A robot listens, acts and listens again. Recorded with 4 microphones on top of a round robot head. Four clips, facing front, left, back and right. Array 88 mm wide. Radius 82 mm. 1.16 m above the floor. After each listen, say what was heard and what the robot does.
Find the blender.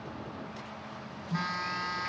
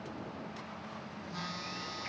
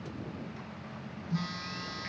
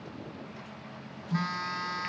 Keep listening.
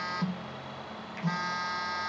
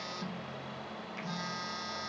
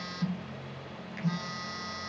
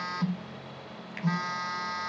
Keep listening.
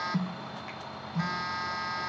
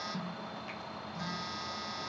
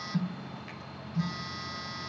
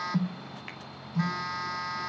I can't make out a blender to turn to.